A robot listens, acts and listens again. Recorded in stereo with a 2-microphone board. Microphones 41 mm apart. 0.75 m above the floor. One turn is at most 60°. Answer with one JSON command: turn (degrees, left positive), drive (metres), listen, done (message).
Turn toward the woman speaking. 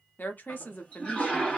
{"turn": 45}
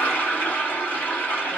{"listen": true}
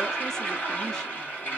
{"listen": true}
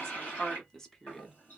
{"turn": 15}
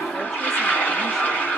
{"listen": true}
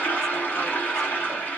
{"listen": true}
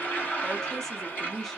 {"done": "Found it: a woman speaking, straight ahead, under 1 m away."}